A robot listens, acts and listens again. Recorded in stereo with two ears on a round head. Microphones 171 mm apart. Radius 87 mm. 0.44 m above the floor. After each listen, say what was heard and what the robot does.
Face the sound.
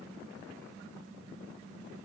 Keep listening.
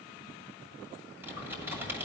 Turn 30° right.
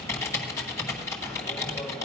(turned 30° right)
So it is at 15° left. Turn 15° left.
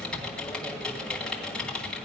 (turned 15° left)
Found it: typing on a keyboard, straight ahead, 1 to 2 m away.